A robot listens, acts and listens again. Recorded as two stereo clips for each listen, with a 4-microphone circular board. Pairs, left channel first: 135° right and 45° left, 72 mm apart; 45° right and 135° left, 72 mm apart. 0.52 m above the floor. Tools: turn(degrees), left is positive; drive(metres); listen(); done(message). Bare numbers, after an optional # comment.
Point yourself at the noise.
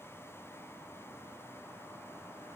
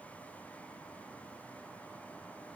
listen()
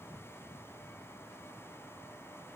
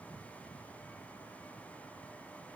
listen()
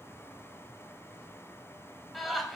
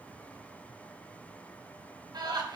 # The laughter: 135° left.
turn(135)
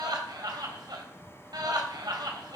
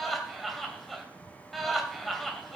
# The laughter is now 45° left.
turn(45)
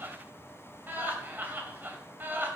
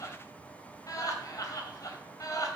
# The laughter is now 15° right.
turn(-15)
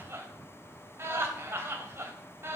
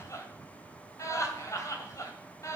done("Found it: laughter, straight ahead.")